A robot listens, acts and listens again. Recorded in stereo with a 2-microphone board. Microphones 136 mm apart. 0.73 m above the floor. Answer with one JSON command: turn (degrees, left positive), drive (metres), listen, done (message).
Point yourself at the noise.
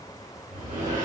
{"turn": -90}
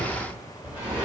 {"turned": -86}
{"turn": -10}
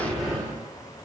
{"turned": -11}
{"done": "Facing the sliding door, 1 to 2 m away."}